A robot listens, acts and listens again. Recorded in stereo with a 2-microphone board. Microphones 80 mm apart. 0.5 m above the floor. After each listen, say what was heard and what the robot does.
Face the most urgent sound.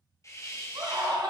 The scream: about 65° right or 115° right. Turn 65° right.
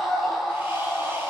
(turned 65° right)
Found it: a scream, straight ahead.